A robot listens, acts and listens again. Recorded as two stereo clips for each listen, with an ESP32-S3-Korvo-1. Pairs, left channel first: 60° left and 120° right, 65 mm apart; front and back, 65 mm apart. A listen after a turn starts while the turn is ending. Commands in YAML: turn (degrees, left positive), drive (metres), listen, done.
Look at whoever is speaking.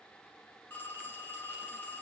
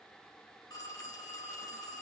listen: true
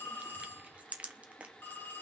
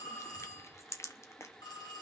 listen: true
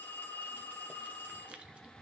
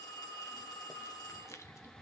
done: "I can't make out anyone speaking, only crushing and a phone ringing."